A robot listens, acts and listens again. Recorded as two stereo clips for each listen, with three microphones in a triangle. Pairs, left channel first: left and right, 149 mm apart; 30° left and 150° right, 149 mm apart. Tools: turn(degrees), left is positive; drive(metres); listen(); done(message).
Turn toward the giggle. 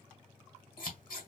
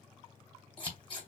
listen()
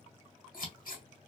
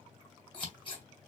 listen()
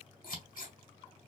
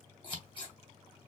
done("I can't make out a giggle, only scissors.")